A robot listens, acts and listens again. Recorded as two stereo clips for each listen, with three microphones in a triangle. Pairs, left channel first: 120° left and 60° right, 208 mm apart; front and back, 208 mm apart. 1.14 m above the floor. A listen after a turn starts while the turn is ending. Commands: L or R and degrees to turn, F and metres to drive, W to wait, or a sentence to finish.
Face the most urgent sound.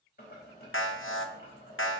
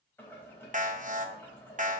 L130
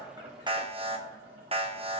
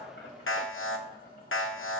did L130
Facing the alarm.